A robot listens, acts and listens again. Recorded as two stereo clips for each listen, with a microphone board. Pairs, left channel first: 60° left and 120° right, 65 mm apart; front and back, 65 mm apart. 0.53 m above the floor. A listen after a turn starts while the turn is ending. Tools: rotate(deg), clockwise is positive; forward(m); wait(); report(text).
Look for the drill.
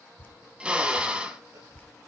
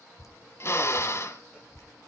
rotate(45)
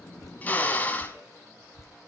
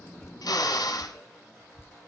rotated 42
report("Facing the drill.")